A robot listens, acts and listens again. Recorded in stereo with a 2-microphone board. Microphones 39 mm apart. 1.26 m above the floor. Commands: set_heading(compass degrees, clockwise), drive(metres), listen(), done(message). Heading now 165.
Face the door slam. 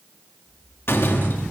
set_heading(90)
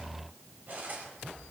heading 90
listen()
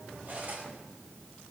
done("I heard a door slam, but can't make it out now. It was about straight ahead or 30° left.")